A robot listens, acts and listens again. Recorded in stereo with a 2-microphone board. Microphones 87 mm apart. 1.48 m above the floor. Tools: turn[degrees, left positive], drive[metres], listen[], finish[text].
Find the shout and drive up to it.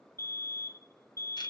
Action: listen[]
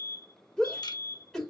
Action: turn[30]
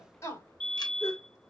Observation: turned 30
Thought: So it is at 145° left.
Action: turn[145]
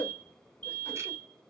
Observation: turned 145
Thought: The shout is now 30° left.
Action: turn[30]
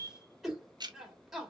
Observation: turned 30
Action: drive[1.0]
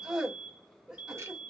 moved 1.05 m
Thought: The shout is now 10° right.
Action: turn[-10]
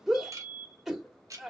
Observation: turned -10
Action: drive[1.0]
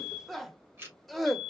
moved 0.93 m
Action: drive[1.0]
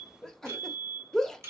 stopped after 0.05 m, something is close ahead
Action: finish[Arrived at the shout, straight ahead.]